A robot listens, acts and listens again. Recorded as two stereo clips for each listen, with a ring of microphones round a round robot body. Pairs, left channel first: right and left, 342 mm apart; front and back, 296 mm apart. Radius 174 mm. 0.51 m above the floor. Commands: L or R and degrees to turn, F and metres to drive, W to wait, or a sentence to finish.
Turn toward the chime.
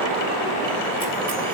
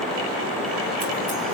W
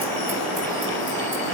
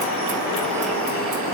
W
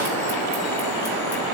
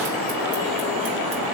I can't make out a chime to turn to.